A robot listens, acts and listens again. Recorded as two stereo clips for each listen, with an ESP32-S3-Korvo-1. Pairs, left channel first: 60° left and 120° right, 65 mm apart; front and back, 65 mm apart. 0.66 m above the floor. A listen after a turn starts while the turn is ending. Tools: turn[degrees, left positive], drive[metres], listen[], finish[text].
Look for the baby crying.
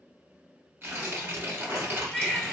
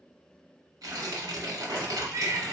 Thought: The baby crying: 150° left.
Action: turn[150]
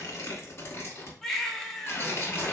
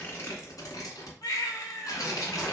Thought: The baby crying is now 25° right.
Action: turn[-25]
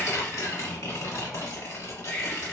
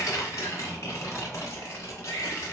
Action: finish[Found it: a baby crying, straight ahead.]